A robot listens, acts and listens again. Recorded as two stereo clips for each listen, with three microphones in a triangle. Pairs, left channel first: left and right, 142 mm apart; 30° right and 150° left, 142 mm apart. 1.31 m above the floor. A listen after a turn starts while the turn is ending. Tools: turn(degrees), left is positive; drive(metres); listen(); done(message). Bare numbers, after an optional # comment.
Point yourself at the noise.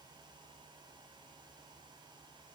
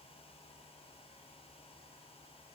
listen()
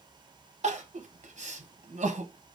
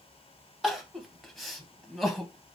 # The crying: 120° right.
turn(-120)
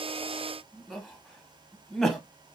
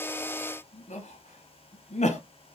done("Facing the crying, under 1 m away.")